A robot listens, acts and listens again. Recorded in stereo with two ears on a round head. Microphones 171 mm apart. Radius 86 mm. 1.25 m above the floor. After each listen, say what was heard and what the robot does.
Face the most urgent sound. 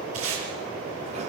Keep listening.
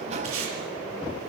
Keep listening.
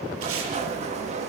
I can't make out anything urgent to turn to.